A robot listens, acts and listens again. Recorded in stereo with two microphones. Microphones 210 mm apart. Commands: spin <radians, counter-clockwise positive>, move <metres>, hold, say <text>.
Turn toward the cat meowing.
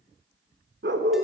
hold
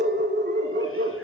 hold
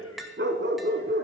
say I can't make out a cat meowing, only a dog barking and tapping.